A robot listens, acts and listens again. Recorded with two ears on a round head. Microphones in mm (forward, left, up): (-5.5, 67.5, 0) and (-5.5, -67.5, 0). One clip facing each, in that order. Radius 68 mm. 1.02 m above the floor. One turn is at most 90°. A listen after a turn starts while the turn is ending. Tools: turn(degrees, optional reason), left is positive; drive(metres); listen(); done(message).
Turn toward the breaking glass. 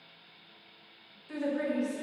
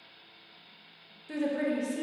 listen()
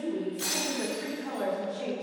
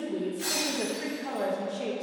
turn(degrees=70, reason="The breaking glass: about 70° left or 110° left.")
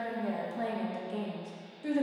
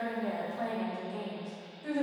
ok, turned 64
listen()
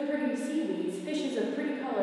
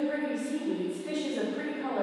done("I heard breaking glass, but can't make it out now. It was about 5° left or 50° left.")